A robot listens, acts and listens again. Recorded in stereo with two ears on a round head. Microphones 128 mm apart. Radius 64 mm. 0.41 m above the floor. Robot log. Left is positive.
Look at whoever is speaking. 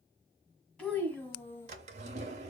note: The child speaking: about 15° left or 165° left.
cmd yaw +15
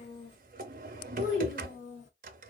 note: So it is at 125° left.
cmd yaw +125
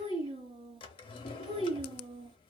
note: The child speaking is now 35° right.
cmd yaw -35
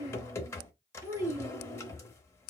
note: The child speaking is now 15° right.
cmd yaw -15
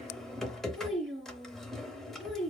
end: Facing the child speaking, 2 to 4 m away.